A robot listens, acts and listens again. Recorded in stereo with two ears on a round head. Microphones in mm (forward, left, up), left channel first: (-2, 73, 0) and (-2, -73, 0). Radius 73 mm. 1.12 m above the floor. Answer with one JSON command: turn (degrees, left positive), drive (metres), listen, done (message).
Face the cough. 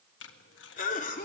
{"turn": 50}
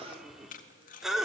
{"done": "Facing the cough, 2 to 4 m away."}